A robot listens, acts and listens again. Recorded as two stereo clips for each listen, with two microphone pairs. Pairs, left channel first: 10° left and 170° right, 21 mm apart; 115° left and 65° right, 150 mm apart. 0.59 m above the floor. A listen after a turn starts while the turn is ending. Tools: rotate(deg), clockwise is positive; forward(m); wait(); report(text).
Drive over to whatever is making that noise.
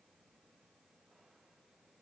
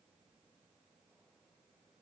wait()
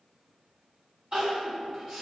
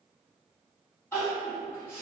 rotate(165)
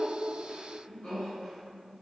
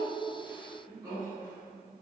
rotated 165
rotate(-10)
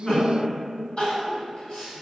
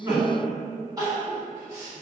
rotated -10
forward(1.0)
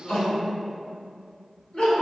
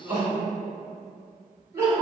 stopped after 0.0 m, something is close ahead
report("Blocked. The crying is further on, straight ahead.")